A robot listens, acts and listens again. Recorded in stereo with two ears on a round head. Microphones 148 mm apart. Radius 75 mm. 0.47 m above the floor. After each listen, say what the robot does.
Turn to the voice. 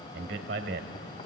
Turn 65° right.
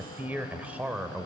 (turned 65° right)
Found it: a man speaking, straight ahead, 1 to 2 m away.